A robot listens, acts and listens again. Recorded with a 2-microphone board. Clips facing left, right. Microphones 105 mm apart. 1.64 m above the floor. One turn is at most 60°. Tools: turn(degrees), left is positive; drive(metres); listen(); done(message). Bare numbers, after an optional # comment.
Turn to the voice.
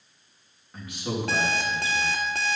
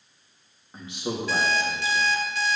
# The man speaking: about 25° right or 155° right.
turn(-25)
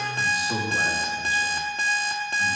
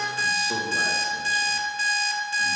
done("Found it: a man speaking, straight ahead, 2 to 4 m away.")